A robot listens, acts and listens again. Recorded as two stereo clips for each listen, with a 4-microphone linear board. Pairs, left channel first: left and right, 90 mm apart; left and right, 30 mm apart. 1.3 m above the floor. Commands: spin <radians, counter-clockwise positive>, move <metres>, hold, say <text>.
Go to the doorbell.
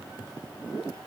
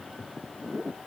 hold
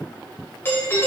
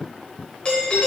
spin 0.52
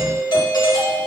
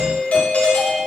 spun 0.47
spin 2.18
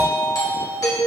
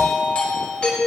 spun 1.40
spin 0.79
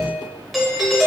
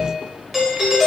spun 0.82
move 1.0
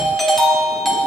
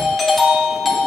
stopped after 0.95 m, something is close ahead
say Arrived at the doorbell, straight ahead.